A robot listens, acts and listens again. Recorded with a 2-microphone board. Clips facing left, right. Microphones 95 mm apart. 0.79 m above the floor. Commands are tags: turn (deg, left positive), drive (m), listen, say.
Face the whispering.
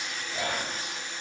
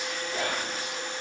<turn deg="-65"/>
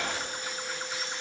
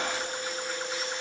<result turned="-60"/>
<turn deg="-25"/>
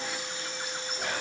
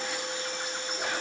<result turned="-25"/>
<listen/>
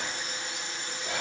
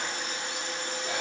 <listen/>
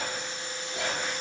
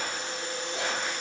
<say>Found it: whispering, straight ahead, 1 to 2 m away.</say>